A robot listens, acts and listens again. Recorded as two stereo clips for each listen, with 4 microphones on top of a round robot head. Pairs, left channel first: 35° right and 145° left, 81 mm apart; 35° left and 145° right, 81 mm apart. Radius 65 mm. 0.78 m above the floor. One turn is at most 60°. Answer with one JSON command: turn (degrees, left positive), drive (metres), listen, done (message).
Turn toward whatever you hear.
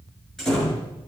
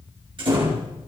{"turn": -60}
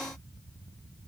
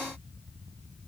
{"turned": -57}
{"turn": -60}
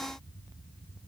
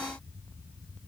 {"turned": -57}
{"turn": -10}
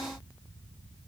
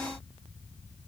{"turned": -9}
{"done": "I heard a door slam from this way, but can't make it out now."}